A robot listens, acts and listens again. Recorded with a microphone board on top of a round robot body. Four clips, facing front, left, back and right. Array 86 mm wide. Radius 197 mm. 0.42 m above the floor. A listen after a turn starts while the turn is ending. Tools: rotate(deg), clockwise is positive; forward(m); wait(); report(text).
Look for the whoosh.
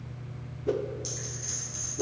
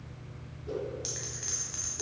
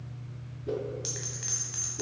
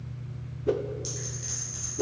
rotate(65)
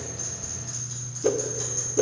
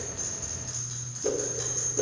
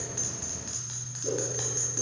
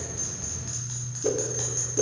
report("Facing the whoosh.")